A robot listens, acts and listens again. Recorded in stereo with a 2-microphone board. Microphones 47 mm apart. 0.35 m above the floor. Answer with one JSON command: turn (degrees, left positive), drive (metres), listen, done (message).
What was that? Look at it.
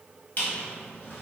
{"turn": 40}
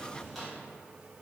{"done": "Found it: a squeak, straight ahead."}